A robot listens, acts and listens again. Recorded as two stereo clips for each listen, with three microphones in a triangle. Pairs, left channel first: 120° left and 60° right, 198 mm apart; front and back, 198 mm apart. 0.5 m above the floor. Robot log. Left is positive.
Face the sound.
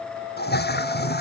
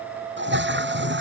note: The toilet flushing: 155° left.
cmd yaw +155
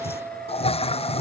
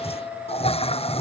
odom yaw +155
note: The toilet flushing is now 60° left.
cmd yaw +60
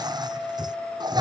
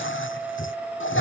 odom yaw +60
note: The toilet flushing is now 10° left.
cmd yaw +10
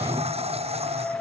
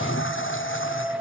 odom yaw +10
end: Facing the toilet flushing.